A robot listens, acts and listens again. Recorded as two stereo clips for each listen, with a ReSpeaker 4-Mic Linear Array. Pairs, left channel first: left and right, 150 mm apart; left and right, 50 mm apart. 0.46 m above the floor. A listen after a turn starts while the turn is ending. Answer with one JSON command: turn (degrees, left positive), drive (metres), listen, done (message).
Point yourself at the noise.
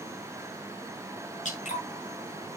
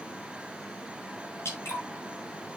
{"turn": 55}
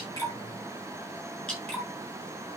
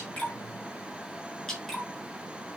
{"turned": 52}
{"done": "Facing the dripping, over 4 m away."}